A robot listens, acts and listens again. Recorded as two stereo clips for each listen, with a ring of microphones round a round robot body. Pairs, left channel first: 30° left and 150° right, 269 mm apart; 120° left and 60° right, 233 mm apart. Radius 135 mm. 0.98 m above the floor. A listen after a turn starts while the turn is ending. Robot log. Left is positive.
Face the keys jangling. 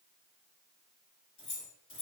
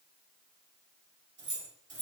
note: The keys jangling: 20° right.
cmd yaw -20
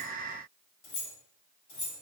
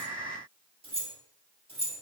end: Facing the keys jangling, 2 to 4 m away.